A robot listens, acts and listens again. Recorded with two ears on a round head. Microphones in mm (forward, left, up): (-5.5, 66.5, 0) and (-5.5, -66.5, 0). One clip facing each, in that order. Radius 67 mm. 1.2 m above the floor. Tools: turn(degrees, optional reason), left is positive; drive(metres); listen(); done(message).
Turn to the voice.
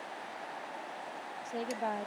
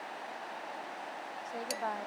turn(degrees=25, reason="The woman speaking: about 25° left or 155° left.")
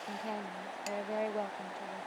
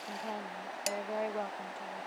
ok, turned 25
done("Found it: a woman speaking, straight ahead.")